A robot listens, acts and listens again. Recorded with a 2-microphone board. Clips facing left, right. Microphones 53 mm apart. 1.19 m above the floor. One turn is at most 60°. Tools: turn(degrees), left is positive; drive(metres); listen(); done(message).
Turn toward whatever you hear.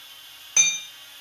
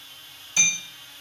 turn(degrees=55)
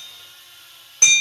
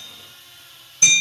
turn(degrees=60)
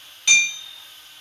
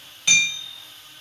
done("Facing the hammering.")